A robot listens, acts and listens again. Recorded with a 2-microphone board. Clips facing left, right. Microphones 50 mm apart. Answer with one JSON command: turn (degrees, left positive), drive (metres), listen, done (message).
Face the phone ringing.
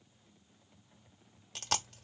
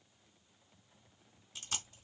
{"listen": true}
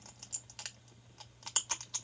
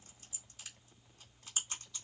{"listen": true}
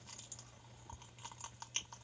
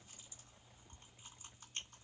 {"done": "I can't make out a phone ringing, only chewing."}